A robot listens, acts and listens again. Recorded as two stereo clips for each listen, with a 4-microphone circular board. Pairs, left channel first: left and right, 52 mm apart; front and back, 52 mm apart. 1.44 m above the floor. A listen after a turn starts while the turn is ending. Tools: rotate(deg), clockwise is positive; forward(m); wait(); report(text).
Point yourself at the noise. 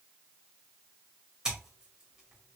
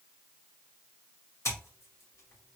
rotate(15)
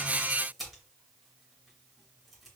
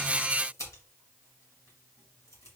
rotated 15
report("Facing the scissors.")